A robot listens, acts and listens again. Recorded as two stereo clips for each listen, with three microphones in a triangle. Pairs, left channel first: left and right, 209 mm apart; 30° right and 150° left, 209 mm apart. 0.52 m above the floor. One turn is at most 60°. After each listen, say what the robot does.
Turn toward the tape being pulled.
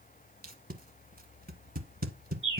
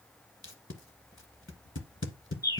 Turn 45° right.
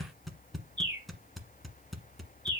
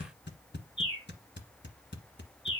Facing the tape being pulled.